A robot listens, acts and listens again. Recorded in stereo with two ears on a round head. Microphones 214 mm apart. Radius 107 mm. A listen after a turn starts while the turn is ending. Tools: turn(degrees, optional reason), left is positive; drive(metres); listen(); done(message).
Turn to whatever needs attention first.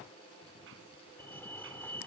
turn(degrees=30)
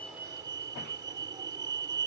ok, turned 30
turn(degrees=-15, reason="So it is at 15° right.")
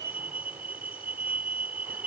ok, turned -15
done("Facing the fire alarm.")